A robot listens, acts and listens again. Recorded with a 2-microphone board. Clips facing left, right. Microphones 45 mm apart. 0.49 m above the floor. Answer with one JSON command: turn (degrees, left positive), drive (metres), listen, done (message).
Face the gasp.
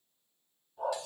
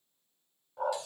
{"listen": true}
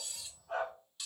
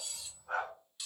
{"listen": true}
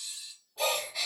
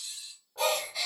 {"turn": 30}
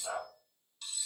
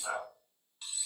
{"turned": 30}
{"listen": true}
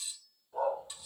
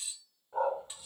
{"done": "I heard a gasp, but can't make it out now. It was about 25° right or 145° left."}